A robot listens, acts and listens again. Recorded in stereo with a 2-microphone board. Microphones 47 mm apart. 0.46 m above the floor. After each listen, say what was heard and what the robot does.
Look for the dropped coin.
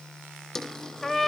Turn 30° left.
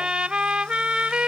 Keep listening.
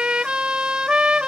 I heard a dropped coin, but can't make it out now. It was about 20° right or 140° left.